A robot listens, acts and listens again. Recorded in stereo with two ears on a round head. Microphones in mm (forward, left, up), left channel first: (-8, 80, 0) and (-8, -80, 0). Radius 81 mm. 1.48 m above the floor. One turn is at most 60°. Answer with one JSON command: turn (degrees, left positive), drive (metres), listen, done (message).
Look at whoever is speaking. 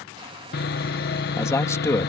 {"turn": 15}
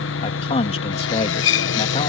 {"turn": 60}
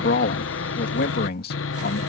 {"turn": 60}
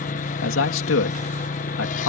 {"turn": 60}
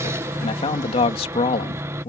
{"turn": 30}
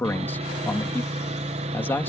{"turn": 10}
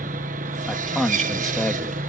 {"done": "Facing the man speaking."}